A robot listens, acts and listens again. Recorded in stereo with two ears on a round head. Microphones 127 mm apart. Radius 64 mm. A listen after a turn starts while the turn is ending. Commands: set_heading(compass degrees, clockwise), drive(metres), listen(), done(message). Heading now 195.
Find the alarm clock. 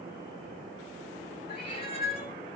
listen()
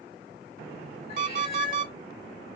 set_heading(285)
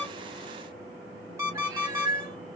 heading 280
set_heading(295)
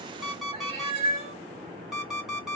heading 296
done("Facing the alarm clock.")